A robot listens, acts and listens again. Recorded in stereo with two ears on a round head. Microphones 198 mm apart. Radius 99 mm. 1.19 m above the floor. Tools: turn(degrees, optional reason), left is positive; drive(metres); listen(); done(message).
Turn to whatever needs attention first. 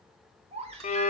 turn(degrees=-30, reason="The baby crying: about 30° right or 150° right.")
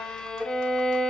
listen()
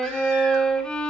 listen()
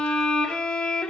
done("I heard a baby crying, but can't make it out now. It was about straight ahead or 120° right.")